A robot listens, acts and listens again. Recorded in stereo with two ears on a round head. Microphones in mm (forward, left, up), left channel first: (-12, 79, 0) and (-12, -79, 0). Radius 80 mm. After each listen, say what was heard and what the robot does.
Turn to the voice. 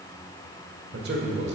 The man speaking: about 60° right or 120° right. Turn 60° right.
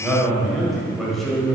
Found it: a man speaking, straight ahead.